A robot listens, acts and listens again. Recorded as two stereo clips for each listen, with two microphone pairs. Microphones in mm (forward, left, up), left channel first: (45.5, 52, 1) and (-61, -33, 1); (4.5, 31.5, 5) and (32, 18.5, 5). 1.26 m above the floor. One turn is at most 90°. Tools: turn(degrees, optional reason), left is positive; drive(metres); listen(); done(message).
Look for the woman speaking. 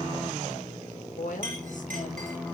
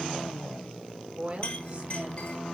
turn(degrees=25, reason="The woman speaking: 25° left.")
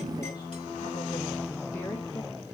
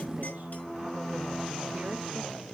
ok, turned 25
listen()
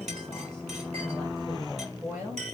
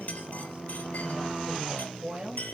turn(degrees=-60, reason="The woman speaking is now 60° right.")
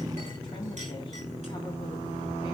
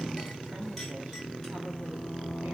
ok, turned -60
listen()
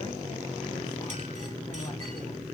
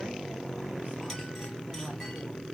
listen()
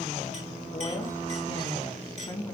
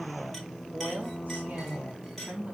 done("Found it: a woman speaking, straight ahead, 2 to 4 m away.")